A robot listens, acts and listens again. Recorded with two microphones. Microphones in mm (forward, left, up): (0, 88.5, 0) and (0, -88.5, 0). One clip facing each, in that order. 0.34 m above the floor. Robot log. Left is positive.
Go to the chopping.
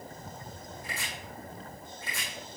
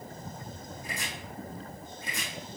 note: The chopping: about 15° right or 165° right.
cmd yaw -15
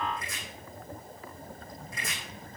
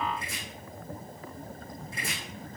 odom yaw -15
note: So it is at 150° right.
cmd yaw -150
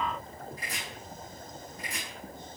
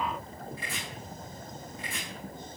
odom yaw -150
note: The chopping is now 40° left.
cmd yaw +40
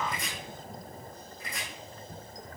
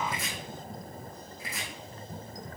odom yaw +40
cmd fwd 1.0
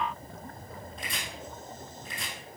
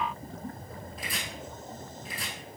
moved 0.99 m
cmd fwd 1.0
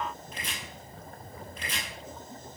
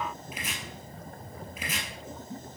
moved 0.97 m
cmd fwd 1.0
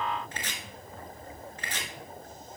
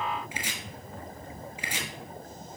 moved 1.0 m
note: The chopping is now 10° right.
cmd yaw -10
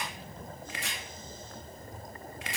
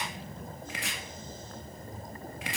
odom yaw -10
cmd fwd 1.0
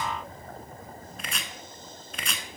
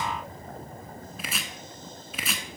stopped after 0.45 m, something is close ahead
end: Arrived at the chopping, straight ahead.